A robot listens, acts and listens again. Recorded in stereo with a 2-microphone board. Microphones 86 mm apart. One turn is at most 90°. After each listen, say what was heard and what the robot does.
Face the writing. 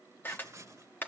The writing: about 35° right or 145° right. Turn 35° right.
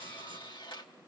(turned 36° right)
Keep listening.
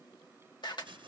So it is at 110° right. Turn 90° right.
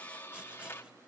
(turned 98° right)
Nothing new. It was at 15° right. Turn 15° right.
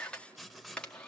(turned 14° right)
Found it: writing, straight ahead, 1 to 2 m away.